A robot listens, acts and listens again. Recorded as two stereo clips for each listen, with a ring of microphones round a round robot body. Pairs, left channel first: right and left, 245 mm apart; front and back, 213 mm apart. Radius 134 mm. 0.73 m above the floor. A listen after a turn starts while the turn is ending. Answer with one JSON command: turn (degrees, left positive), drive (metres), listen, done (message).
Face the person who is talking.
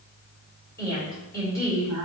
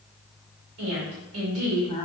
{"turn": -170}
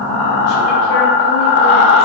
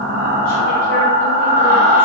{"listen": true}
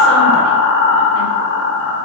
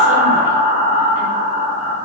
{"listen": true}
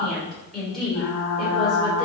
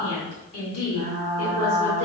{"done": "Facing the woman speaking, 2 to 4 m away."}